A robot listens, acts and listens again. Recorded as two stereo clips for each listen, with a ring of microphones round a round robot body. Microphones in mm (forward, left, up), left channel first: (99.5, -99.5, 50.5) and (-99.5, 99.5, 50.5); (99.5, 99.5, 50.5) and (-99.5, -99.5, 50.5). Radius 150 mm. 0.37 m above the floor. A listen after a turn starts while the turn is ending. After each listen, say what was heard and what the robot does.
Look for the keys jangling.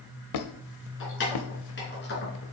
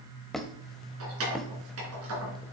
The keys jangling: 100° right. Turn 100° right.
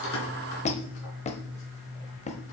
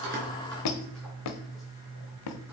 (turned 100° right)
Keep listening.
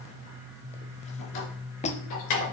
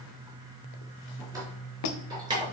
The keys jangling is now 60° right. Turn 60° right.
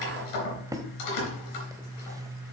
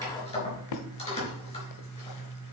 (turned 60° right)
The keys jangling is now 25° right. Turn 25° right.
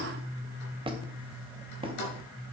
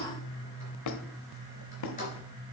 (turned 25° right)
The keys jangling is now 20° right. Turn 20° right.
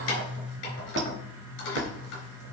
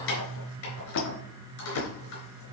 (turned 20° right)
Facing the keys jangling, 2 to 4 m away.